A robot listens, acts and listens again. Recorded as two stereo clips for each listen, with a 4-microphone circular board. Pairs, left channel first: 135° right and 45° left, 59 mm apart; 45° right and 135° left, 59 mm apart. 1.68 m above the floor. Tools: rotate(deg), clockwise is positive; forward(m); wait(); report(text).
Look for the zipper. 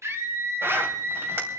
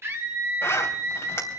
report("Found it: a zipper, straight ahead.")